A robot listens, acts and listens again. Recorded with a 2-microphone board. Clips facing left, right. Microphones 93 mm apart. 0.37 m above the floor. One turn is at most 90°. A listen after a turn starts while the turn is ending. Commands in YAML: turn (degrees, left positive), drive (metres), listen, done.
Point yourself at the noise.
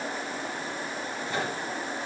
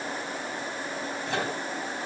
turn: -70
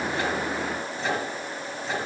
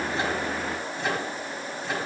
done: "Facing the microwave."